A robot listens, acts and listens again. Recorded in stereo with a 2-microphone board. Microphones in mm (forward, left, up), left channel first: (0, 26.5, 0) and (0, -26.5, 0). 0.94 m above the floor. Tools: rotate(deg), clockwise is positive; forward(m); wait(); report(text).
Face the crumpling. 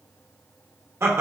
wait()
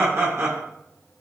wait()
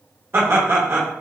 report("I can't make out crumpling, only laughter.")